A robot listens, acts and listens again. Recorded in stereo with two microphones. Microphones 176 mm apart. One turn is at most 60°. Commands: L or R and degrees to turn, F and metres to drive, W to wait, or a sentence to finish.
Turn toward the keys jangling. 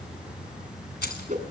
L60
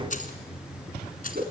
L55
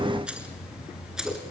Facing the keys jangling.